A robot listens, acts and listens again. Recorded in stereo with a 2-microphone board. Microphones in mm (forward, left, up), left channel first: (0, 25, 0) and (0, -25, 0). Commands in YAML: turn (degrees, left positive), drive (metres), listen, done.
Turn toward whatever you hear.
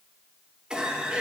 turn: -15
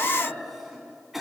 done: "Facing the cough, 2 to 4 m away."